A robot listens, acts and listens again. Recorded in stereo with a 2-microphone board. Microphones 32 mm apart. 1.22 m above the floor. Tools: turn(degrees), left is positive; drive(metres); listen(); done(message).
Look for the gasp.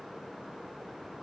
listen()
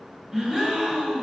turn(degrees=-20)
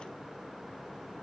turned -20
listen()
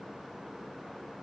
done("I heard a gasp, but can't make it out now. It was about straight ahead or 140° right.")